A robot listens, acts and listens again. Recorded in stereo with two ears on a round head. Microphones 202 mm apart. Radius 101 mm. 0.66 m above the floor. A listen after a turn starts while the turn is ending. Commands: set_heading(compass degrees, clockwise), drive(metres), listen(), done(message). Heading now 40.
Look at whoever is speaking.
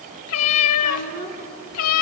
set_heading(75)
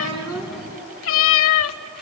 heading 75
listen()
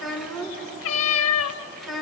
done("Facing the child speaking.")